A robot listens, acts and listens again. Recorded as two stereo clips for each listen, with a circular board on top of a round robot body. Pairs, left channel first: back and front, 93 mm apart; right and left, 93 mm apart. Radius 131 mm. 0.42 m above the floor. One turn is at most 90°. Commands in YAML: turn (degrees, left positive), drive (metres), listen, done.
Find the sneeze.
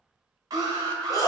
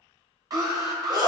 turn: 90
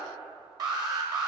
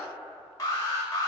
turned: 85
turn: 45
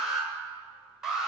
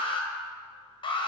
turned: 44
done: "I heard a sneeze from this way, but can't make it out now."